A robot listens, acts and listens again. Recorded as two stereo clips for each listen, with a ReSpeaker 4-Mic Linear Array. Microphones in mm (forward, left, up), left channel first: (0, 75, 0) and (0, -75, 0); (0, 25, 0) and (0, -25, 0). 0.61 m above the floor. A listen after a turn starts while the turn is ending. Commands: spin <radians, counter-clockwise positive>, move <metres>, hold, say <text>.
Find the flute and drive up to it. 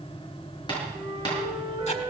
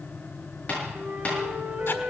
spin -0.44
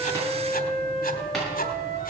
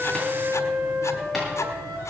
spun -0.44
spin -2.27
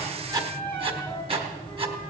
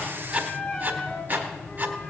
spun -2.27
spin 0.26
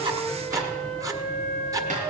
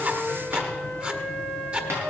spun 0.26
move 1.0
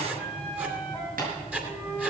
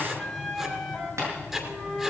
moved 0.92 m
move 1.0
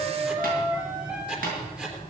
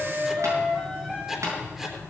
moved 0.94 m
spin -0.17
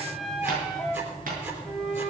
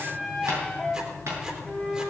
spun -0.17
move 1.0
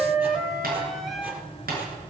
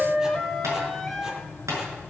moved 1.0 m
move 1.0
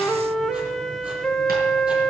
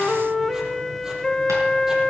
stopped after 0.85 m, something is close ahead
say I am next to the flute.